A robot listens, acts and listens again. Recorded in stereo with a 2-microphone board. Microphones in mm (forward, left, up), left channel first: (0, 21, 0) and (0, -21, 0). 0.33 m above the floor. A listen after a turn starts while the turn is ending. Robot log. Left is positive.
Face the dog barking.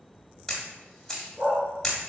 cmd yaw -90
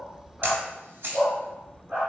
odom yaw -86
note: So it is at 35° right.
cmd yaw -35
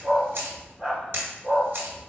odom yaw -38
note: The dog barking is now 10° right.
cmd yaw -10
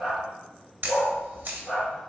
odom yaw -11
end: Found it: a dog barking, straight ahead, 2 to 4 m away.